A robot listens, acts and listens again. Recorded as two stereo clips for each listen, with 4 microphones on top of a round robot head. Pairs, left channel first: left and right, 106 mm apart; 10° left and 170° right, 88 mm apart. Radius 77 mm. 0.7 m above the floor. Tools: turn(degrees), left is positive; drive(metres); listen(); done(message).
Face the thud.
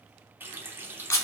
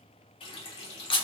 listen()
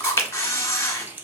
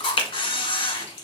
listen()
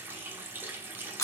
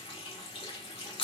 done("I can't make out a thud to turn to.")